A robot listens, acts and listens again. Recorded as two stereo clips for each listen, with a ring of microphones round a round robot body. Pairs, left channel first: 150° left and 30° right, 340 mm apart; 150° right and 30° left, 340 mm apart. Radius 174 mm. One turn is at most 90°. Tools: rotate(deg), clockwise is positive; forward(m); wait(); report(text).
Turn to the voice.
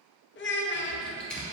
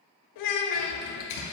rotate(90)
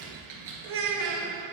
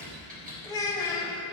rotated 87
rotate(70)
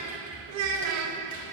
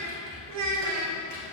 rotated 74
report("Facing the child speaking.")